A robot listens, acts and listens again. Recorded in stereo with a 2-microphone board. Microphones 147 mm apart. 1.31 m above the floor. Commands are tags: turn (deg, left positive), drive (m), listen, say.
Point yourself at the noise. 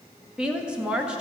<turn deg="-30"/>
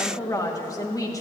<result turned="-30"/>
<turn deg="25"/>
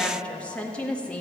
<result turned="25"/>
<turn deg="10"/>
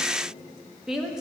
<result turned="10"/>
<say>Facing the woman speaking, 1 to 2 m away.</say>